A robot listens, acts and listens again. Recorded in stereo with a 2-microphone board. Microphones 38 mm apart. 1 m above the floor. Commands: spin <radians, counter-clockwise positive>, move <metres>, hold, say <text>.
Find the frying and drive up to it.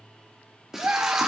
spin -0.52
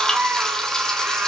hold
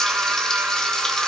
hold
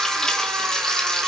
spin 0.35
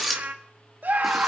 move 1.0
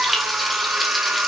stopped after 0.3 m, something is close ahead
say Blocked. The frying is further on, straight ahead.